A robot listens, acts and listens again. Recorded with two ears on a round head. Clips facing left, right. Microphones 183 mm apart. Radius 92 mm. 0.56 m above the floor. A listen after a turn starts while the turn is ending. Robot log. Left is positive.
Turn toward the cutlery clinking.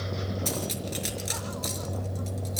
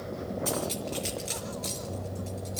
note: The cutlery clinking: about 20° left or 160° left.
cmd yaw +20
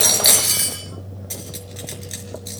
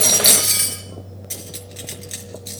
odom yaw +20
end: Found it: cutlery clinking, straight ahead, over 4 m away.